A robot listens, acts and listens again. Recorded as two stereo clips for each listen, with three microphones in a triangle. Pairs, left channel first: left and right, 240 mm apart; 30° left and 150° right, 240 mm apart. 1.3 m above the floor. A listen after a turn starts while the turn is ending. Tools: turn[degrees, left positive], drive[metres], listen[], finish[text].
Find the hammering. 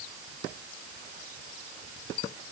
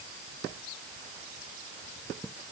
Action: listen[]
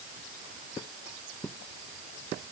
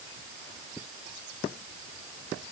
Action: listen[]
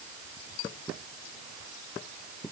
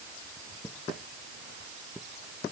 Action: finish[I can't make out hammering to turn to.]